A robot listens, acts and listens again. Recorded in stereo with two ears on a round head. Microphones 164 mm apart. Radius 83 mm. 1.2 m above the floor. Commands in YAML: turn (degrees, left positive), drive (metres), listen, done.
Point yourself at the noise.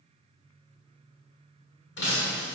turn: 65
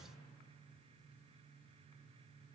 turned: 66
listen: true
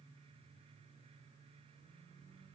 done: "I heard breaking glass, but can't make it out now. It was about straight ahead or 45° left."